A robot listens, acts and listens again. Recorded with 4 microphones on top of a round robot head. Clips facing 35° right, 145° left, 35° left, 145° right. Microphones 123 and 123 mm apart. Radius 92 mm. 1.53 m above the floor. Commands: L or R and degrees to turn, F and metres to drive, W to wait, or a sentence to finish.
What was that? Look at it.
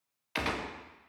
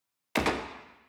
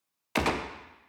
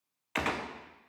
L95
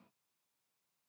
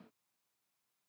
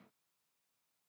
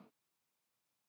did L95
Facing where the gunshot came from. I can't hear it now.